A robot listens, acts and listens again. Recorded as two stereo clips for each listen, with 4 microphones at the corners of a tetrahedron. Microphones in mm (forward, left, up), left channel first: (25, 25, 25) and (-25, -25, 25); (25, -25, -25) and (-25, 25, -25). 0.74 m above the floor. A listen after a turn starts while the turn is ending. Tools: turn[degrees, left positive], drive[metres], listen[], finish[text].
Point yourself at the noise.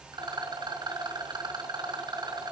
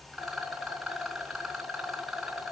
Thought: The rattle: 140° right.
Action: turn[-140]
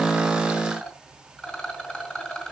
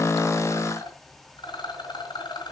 Thought: The rattle is now 35° right.
Action: turn[-35]
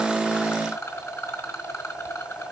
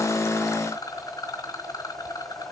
Action: finish[Found it: a rattle, straight ahead, 2 to 4 m away.]